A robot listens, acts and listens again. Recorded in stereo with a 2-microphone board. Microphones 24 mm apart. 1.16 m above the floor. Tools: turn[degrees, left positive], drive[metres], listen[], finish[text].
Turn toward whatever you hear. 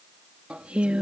Thought: The singing: about 60° right or 120° right.
Action: turn[-60]
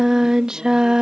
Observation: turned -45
Thought: So it is at 40° right.
Action: turn[-40]
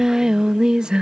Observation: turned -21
Thought: The singing is now 45° right.
Action: turn[-45]
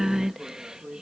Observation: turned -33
Thought: The singing is now 25° right.
Action: turn[-25]
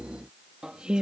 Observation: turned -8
Thought: The singing is now 45° right.
Action: turn[-45]
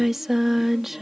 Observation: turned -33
Thought: The singing is now 15° right.
Action: turn[-15]
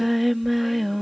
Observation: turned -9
Action: finish[Facing the singing.]